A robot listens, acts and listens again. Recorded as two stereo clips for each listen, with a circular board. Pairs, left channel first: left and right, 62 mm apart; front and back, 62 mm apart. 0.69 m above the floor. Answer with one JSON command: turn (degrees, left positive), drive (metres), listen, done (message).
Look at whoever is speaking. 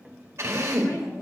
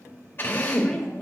{"turn": 80}
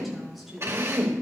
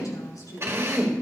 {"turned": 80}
{"done": "Found it: a woman speaking, straight ahead."}